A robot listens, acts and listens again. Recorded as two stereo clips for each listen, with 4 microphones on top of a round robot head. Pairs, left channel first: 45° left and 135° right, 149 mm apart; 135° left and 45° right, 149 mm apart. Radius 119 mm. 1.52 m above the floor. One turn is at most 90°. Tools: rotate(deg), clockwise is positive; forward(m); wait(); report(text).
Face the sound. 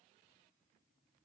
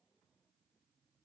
wait()
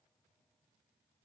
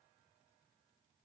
wait()
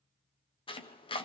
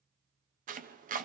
rotate(10)
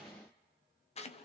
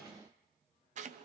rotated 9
report("Facing the chopping.")